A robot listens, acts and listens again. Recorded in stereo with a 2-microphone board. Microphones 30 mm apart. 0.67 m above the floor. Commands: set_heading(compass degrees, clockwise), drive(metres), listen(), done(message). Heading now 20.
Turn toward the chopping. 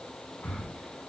listen()
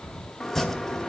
set_heading(350)
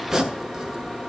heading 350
set_heading(5)
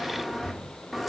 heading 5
done("Found it: chopping, straight ahead, under 1 m away.")